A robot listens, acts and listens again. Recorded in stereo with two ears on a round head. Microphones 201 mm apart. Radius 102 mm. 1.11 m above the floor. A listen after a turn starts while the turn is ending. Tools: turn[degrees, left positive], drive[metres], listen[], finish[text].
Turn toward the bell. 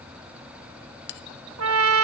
Thought: The bell: about 50° left or 130° left.
Action: turn[50]
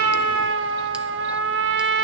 Action: listen[]
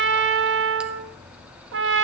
Action: listen[]
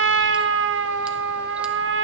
Action: finish[I heard a bell, but can't make it out now. It was about straight ahead or 80° left.]